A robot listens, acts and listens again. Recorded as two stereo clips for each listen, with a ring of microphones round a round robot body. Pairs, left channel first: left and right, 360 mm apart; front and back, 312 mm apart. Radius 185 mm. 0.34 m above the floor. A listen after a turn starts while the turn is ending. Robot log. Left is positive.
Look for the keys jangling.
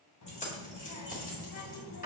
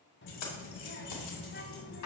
note: The keys jangling: 25° left.
cmd yaw +25
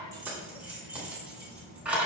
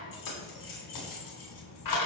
end: Found it: keys jangling, straight ahead.